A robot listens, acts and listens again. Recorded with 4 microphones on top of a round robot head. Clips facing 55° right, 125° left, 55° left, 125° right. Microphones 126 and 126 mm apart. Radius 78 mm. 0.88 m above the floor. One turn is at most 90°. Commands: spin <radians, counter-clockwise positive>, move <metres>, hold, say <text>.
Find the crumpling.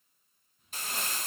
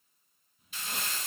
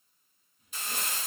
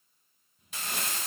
spin -1.57
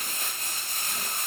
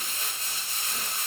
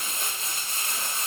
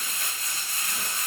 spin -0.17
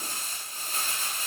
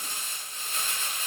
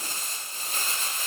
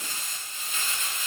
say Facing the crumpling.